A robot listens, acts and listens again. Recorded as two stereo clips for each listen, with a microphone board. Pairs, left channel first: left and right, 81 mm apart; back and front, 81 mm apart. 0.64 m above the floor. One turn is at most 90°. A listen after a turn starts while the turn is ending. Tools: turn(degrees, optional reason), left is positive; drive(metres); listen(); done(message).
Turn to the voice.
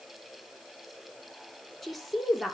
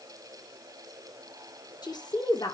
turn(degrees=90, reason="The woman speaking: straight behind.")
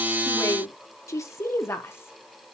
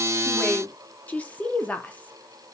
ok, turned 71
turn(degrees=90, reason="The woman speaking is now 120° left.")
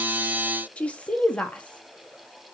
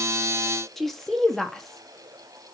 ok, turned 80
turn(degrees=90, reason="The woman speaking is now 100° left.")
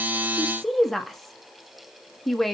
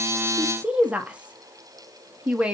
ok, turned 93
turn(degrees=10, reason="The woman speaking is now 10° left.")
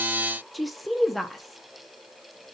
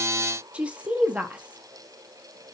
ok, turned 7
done("Facing the woman speaking, 1 to 2 m away.")